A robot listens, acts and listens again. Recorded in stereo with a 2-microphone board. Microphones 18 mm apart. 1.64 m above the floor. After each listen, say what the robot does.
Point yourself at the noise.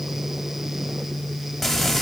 Turn 30° left.
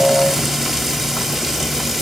Turn 15° right.
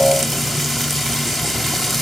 Found it: frying, straight ahead, 2 to 4 m away.